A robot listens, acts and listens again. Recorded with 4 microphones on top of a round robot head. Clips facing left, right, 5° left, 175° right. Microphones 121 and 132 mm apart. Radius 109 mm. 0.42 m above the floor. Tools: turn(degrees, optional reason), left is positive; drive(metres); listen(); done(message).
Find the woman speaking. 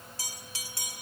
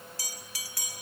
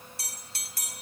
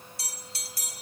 listen()
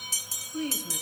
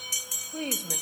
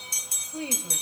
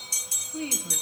turn(degrees=-60, reason="The woman speaking: 60° right.")
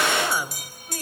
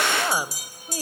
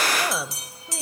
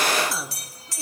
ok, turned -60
turn(degrees=-25, reason="The woman speaking is now 25° right.")
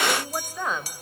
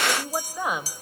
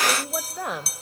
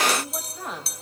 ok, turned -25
turn(degrees=-15, reason="The woman speaking is now 15° right.")
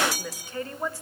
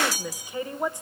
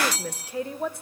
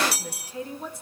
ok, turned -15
turn(degrees=-20, reason="The woman speaking is now 20° right.")
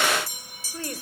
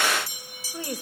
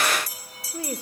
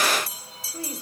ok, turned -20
turn(degrees=-15, reason="The woman speaking is now 15° right.")
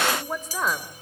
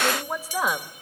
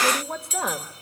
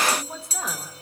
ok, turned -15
turn(degrees=-10, reason="The woman speaking is now 10° right.")
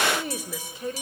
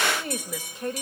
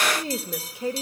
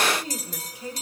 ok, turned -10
done("Found it: a woman speaking, straight ahead, 1 to 2 m away.")